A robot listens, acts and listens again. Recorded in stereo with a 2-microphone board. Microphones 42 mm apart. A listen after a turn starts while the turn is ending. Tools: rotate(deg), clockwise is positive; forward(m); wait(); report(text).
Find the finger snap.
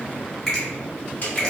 rotate(-30)
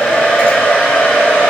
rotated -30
wait()
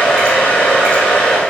wait()
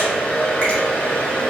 report("I heard a finger snap, but can't make it out now. It was about 25° right or 145° left.")